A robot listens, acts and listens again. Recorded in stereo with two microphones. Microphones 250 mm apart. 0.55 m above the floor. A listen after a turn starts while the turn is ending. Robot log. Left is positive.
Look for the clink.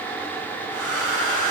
cmd idle
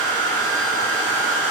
cmd idle
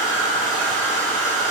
end: I can't make out a clink, only a hair dryer.